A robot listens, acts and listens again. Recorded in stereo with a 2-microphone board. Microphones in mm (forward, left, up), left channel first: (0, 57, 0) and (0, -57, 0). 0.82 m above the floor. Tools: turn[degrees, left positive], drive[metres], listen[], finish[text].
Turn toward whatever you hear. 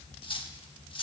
Thought: The cutlery clinking: about 50° left or 130° left.
Action: turn[50]
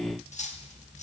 Thought: So it is at 80° left.
Action: turn[80]
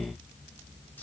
Action: listen[]
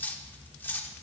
Thought: The cutlery clinking is now 15° left.
Action: turn[15]
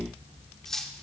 Action: finish[Facing the cutlery clinking, 1 to 2 m away.]